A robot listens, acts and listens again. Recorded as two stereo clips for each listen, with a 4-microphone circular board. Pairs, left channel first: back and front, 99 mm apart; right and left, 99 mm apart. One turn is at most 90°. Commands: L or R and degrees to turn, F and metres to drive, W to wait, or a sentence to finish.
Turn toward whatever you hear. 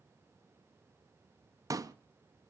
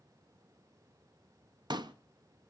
L50
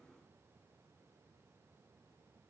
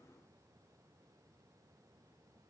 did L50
Facing where the pop came from. I can't hear it now.